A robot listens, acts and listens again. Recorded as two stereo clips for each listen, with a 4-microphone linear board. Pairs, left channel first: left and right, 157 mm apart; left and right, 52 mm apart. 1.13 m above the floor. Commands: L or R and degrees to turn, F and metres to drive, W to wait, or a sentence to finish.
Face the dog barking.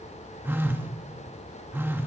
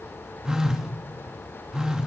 W
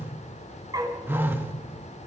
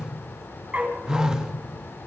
R25
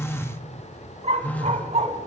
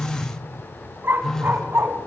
R130
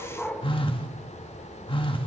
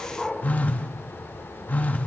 Found it: a dog barking, straight ahead.